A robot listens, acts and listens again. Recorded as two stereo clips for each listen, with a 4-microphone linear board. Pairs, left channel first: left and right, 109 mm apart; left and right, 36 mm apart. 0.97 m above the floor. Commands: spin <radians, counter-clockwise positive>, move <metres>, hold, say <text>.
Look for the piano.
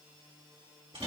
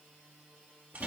hold
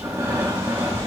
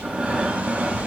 hold
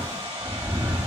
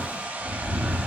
say I can't make out a piano to turn to.